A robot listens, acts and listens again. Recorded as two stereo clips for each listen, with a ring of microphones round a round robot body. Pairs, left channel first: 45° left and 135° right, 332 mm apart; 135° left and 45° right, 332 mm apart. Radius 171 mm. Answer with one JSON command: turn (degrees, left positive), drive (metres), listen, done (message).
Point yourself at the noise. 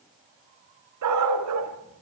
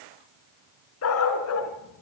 {"turn": 180}
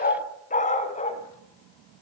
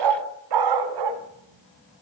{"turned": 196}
{"turn": -25}
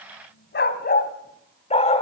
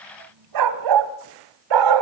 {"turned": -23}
{"turn": -30}
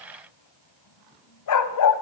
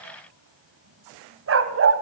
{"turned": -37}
{"done": "Facing the dog barking, 1 to 2 m away."}